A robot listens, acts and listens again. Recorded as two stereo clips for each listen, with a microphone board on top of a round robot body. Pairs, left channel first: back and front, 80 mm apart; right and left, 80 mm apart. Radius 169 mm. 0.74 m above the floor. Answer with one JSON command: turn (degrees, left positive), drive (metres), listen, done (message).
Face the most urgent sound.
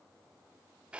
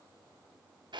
{"listen": true}
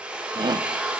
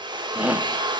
{"turn": 20}
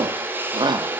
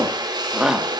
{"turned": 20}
{"turn": 10}
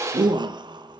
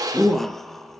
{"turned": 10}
{"done": "Found it: a shout, straight ahead, 1 to 2 m away."}